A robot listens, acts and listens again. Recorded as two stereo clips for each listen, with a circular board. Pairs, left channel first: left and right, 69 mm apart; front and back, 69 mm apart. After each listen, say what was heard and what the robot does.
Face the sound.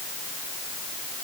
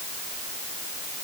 Keep listening.
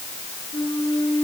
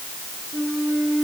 The flute: 100° left. Turn 100° left.
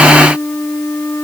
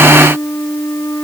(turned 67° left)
The flute is now 35° left. Turn 35° left.
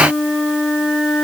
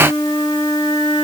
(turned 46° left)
The flute is now 15° right. Turn 15° right.
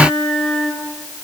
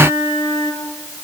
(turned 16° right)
Found it: a flute, straight ahead, over 4 m away.